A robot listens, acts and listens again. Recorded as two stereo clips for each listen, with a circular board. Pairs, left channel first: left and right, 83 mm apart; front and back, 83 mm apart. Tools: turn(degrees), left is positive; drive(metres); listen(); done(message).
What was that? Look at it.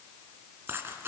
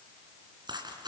turn(degrees=-150)
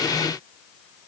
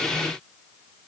done("Facing where the dropped coin came from. I can't hear it now.")